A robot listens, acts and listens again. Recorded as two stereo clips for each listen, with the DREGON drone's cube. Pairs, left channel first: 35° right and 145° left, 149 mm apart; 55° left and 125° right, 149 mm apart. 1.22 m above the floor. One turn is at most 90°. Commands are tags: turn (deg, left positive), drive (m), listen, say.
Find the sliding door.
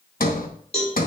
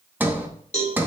<turn deg="-45"/>
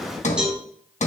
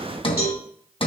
<say>Facing the sliding door, 1 to 2 m away.</say>